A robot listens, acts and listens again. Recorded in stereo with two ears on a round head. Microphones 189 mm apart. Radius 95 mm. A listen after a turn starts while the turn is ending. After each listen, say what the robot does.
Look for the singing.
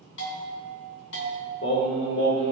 Turn 65° left.
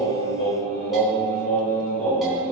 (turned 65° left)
Turn 40° left.
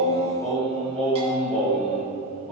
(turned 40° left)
Facing the singing, over 4 m away.